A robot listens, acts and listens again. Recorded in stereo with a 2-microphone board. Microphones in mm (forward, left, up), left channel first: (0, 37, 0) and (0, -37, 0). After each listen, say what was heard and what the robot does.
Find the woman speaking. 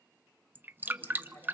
The woman speaking: about 45° left or 135° left. Turn 45° left.
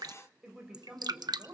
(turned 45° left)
So it is at 10° right. Turn 10° right.
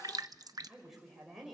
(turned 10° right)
Facing the woman speaking.